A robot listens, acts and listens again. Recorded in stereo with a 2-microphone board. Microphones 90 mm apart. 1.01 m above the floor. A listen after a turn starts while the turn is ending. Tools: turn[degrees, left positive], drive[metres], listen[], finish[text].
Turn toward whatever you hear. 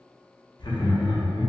Thought: The laughter: about 55° left or 125° left.
Action: turn[55]
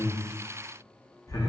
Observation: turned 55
Thought: So it is at 50° left.
Action: turn[50]
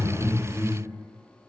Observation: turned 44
Action: finish[Found it: laughter, straight ahead, under 1 m away.]